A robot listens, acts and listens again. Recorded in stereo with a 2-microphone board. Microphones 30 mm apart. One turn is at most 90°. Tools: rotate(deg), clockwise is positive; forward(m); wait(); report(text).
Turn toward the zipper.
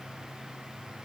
wait()
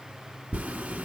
rotate(90)
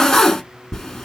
rotate(-15)
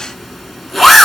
report("Facing the zipper, under 1 m away.")